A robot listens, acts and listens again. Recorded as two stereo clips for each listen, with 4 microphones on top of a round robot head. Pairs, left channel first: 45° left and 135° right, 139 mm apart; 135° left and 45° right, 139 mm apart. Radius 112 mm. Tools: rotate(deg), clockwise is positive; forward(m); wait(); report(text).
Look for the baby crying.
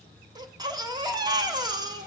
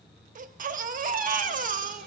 rotate(70)
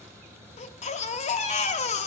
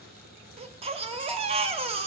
report("Found it: a baby crying, straight ahead.")